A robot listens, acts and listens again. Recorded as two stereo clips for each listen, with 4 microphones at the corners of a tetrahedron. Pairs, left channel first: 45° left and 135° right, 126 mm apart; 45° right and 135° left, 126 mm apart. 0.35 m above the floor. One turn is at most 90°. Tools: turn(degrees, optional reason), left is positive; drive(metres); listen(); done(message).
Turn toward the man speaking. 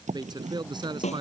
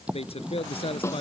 turn(degrees=-85, reason="The man speaking: 85° right.")
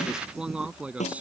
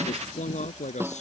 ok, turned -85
turn(degrees=-55, reason="The man speaking is now 55° right.")
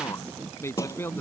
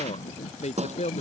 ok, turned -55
turn(degrees=-25, reason="The man speaking is now 25° right.")
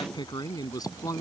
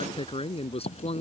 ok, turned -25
turn(degrees=-15, reason="The man speaking is now 15° right.")
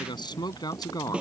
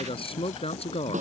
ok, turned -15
turn(degrees=-15, reason="The man speaking is now 15° right.")
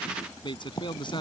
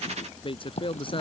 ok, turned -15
done("Found it: a man speaking, straight ahead.")